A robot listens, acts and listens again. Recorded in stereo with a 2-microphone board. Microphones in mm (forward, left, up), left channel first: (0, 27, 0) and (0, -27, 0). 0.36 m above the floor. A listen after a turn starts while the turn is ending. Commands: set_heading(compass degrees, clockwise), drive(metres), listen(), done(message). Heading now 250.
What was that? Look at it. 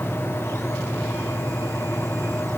listen()
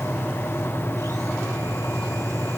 listen()
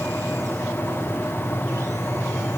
done("I can't make out anything.")